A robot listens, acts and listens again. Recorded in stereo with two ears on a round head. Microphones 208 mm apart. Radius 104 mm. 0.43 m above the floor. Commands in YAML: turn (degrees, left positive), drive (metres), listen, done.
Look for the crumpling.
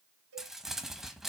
turn: 30
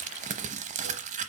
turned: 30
turn: -30
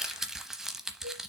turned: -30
done: "Found it: crumpling, straight ahead, under 1 m away."